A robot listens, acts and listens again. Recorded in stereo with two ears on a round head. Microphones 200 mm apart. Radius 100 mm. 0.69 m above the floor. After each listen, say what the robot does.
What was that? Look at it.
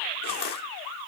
Turn 45° left.
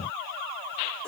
Keep listening.
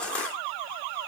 Facing the crushing.